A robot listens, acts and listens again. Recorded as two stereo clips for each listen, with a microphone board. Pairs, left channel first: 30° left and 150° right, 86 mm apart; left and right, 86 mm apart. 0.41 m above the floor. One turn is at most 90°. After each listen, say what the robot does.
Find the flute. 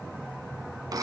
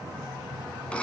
Keep listening.
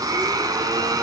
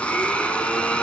Keep listening.
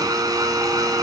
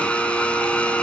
I can't make out a flute, only a blender.